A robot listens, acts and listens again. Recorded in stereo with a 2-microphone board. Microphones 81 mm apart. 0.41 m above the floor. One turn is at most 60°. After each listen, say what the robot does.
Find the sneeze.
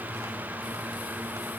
Keep listening.
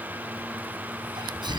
Turn 60° right.
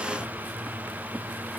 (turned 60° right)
Keep listening.
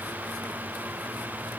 I heard a sneeze, but can't make it out now. It was about 10° right or 50° right.